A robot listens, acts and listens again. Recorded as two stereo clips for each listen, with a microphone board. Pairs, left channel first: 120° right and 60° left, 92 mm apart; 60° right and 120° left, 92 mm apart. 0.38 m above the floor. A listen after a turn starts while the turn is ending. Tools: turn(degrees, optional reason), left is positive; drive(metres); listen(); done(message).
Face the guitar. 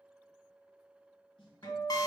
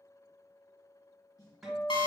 turn(degrees=-155, reason="The guitar: 155° right.")
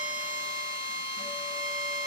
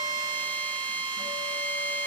listen()
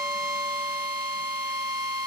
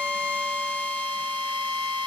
listen()
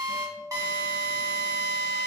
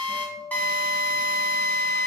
turn(degrees=-70, reason="The guitar is now 70° right.")
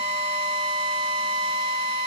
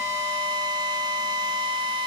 listen()
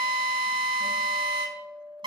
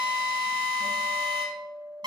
done("Facing the guitar.")